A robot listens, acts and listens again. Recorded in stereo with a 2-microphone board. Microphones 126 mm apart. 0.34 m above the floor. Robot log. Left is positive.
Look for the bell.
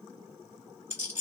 cmd idle
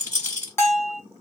note: The bell: about 20° left or 160° left.
cmd yaw +20
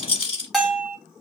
end: Found it: a bell, straight ahead.